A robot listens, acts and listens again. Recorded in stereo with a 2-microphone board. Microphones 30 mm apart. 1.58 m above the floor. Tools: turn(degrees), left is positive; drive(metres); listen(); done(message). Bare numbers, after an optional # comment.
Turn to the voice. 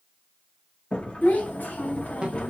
# The child speaking: about 70° left or 110° left.
turn(70)
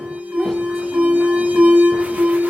listen()
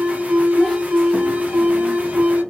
# So it is at 10° left.
turn(10)
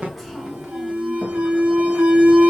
listen()
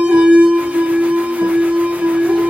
listen()
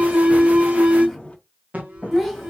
done("Found it: a child speaking, straight ahead, 2 to 4 m away.")